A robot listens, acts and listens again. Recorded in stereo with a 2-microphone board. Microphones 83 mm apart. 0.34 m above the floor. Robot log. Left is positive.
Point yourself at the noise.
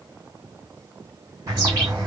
note: The bird: about 40° right or 140° right.
cmd yaw -40
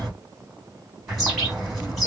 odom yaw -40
end: Facing the bird, 2 to 4 m away.